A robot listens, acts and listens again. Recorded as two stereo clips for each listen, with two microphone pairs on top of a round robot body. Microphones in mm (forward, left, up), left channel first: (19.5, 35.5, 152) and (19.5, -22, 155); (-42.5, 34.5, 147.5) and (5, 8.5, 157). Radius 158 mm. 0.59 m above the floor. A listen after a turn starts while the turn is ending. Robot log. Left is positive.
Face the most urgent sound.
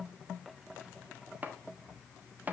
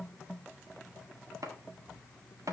cmd idle
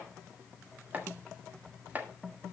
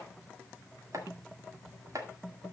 cmd idle
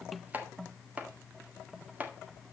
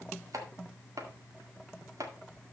end: I can't make out anything urgent to turn to.